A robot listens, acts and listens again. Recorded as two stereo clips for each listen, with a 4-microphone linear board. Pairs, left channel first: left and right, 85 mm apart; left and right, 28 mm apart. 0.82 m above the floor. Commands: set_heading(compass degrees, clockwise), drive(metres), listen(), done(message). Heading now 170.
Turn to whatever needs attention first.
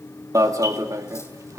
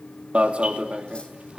set_heading(210)
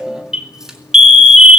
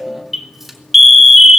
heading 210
set_heading(220)
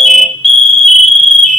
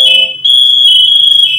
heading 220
done("Found it: an alarm, straight ahead, 2 to 4 m away.")